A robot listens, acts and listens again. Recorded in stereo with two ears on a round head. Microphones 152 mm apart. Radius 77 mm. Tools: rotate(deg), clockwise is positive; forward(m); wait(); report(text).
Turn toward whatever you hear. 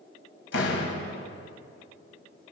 rotate(-90)
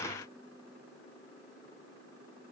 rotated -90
report("I heard a door slam from this way, but can't make it out now.")